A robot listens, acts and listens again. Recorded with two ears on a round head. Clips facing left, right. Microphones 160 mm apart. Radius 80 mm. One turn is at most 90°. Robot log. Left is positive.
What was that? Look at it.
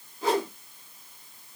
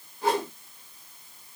note: The whoosh: about 65° left or 115° left.
cmd yaw +65
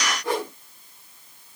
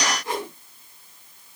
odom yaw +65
note: So it is at 50° left.
cmd yaw +50
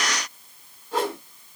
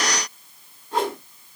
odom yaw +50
end: Found it: a whoosh, straight ahead, over 4 m away.